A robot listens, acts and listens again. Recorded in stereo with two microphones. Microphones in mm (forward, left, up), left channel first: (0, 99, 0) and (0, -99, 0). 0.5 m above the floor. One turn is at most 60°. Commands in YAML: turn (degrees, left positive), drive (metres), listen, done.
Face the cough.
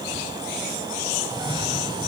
turn: -25
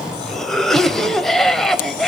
done: "Found it: a cough, straight ahead, 2 to 4 m away."